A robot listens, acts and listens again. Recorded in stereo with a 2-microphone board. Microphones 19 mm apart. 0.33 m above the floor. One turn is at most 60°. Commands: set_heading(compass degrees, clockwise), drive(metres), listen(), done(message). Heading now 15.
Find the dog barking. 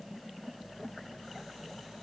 listen()
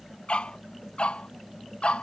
set_heading(315)
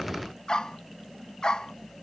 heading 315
set_heading(270)
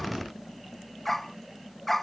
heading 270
set_heading(255)
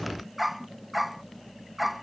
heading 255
done("Facing the dog barking.")